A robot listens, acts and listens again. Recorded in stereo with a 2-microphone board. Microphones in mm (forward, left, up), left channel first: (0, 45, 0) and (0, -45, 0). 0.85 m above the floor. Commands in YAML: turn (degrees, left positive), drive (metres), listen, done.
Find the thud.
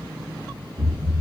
turn: -50
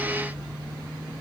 listen: true
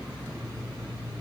done: "I heard a thud, but can't make it out now. It was about straight ahead or 80° right."